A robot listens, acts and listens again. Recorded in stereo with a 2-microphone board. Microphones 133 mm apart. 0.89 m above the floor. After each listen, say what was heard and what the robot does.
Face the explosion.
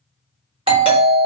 Keep listening.
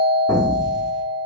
The explosion: about 25° left or 155° left. Turn 25° left.
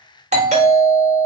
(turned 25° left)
Keep listening.
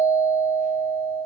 I heard an explosion, but can't make it out now. It was about straight ahead or 130° left.